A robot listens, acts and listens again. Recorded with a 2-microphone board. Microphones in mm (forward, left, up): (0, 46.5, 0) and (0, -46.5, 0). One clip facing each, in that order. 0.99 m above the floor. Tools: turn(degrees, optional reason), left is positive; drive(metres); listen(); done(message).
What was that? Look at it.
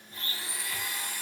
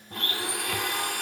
turn(degrees=-65, reason="The blender: about 65° right or 115° right.")
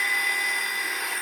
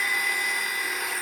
done("Facing the blender, under 1 m away.")